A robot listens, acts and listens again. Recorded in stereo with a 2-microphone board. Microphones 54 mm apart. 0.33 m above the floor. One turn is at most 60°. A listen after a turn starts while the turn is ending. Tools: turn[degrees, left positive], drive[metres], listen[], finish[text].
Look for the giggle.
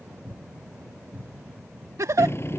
Thought: The giggle: about 70° right or 110° right.
Action: turn[-60]
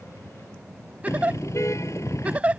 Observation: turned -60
Thought: So it is at 25° right.
Action: turn[-25]
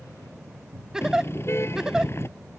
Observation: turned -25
Thought: The giggle is now 10° right.
Action: turn[-10]
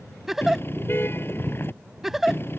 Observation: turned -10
Action: finish[Facing the giggle.]